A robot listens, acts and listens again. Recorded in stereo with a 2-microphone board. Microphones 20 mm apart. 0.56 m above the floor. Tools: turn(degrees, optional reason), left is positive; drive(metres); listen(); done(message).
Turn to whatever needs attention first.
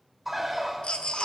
turn(degrees=55, reason="The baby crying: about 55° left or 125° left.")
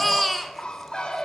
done("Facing the baby crying.")